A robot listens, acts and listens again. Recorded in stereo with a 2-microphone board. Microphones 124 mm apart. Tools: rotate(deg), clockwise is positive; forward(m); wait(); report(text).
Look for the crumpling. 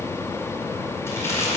rotate(-20)
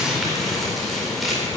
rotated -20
report("Found it: crumpling, straight ahead, over 4 m away.")